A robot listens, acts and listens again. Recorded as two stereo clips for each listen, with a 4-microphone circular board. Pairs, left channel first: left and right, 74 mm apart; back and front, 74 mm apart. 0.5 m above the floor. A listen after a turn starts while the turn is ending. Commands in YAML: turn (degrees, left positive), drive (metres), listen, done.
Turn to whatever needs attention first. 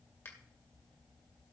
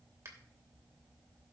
listen: true
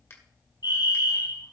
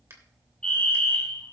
turn: 105
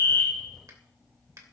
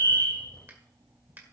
listen: true
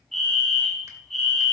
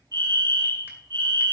done: "Facing the fire alarm, over 4 m away."